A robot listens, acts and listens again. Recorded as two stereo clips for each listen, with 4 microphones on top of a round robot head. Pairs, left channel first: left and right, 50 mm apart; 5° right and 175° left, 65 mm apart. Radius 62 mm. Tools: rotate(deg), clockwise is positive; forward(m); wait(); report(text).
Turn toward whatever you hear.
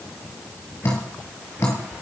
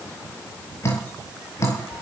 rotate(-45)
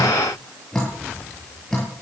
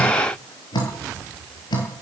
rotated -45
report("Facing the dripping.")